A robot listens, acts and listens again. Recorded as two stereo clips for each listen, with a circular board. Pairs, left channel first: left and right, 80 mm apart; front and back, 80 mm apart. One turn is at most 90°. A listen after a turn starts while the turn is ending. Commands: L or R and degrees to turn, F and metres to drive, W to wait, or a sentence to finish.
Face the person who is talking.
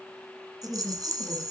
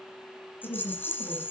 L30
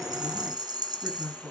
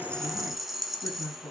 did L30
Facing the woman speaking, over 4 m away.